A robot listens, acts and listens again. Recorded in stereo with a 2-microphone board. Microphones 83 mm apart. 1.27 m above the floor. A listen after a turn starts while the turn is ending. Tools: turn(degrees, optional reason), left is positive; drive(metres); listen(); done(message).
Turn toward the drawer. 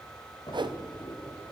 turn(degrees=65, reason="The drawer: about 65° left or 115° left.")
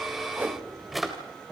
done("Found it: a drawer, straight ahead, 2 to 4 m away.")